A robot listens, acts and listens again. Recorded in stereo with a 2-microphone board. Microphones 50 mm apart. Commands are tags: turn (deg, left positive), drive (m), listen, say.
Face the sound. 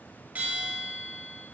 <turn deg="-30"/>
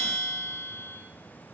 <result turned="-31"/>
<say>Facing the bell.</say>